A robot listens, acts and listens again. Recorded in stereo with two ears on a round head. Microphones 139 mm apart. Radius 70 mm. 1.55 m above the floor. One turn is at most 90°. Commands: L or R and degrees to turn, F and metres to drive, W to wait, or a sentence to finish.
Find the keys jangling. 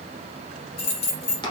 L40
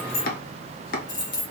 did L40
L30
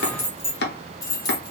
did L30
L25
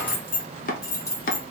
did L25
L20
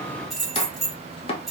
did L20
Facing the keys jangling.